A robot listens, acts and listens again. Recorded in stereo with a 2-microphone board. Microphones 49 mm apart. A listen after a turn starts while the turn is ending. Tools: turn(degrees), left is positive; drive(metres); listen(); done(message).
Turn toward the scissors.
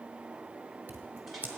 turn(degrees=-40)
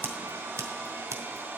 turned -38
turn(degrees=-100)
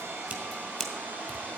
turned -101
done("Found it: scissors, straight ahead, 1 to 2 m away.")